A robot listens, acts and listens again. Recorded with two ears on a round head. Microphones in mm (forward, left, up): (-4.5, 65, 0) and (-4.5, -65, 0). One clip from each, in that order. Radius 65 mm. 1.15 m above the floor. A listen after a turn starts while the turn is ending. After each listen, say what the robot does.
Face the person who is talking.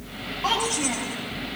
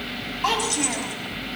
Turn 50° right.
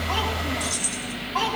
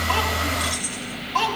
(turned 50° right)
Turn 75° right.
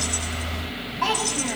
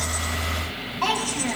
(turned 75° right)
Turn 15° right.
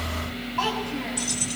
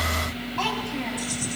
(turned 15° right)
Facing the child speaking.